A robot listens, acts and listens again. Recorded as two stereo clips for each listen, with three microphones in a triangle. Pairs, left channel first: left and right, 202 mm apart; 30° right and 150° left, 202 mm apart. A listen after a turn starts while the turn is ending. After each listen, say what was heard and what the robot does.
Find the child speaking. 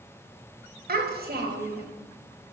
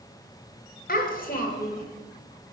The child speaking: 65° right. Turn 65° right.
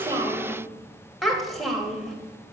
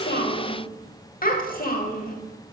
Found it: a child speaking, straight ahead.